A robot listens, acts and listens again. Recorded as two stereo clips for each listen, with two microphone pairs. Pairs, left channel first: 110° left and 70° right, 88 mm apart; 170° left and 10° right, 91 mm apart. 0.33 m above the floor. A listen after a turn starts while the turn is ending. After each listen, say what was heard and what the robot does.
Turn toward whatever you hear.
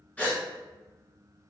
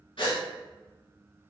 The gasp: 175° right. Turn 175° right.
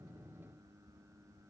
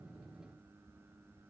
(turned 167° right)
Nothing new. It was at 10° right. Turn 10° right.
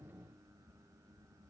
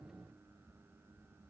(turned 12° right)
Facing where the gasp came from. I can't hear it now.